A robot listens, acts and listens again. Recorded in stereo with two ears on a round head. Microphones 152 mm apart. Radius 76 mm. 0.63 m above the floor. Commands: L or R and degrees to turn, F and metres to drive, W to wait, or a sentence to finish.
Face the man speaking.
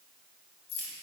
W
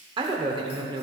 R30
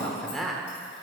Found it: a man speaking, straight ahead.